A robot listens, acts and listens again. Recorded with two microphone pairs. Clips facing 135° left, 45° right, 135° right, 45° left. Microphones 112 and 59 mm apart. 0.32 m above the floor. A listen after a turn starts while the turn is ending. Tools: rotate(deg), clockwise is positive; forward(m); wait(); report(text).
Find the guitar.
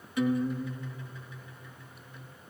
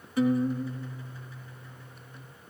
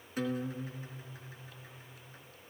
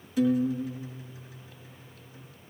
rotate(95)
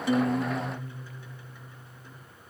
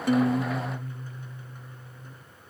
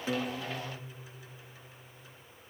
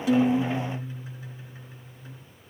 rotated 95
report("Found it: a guitar, straight ahead.")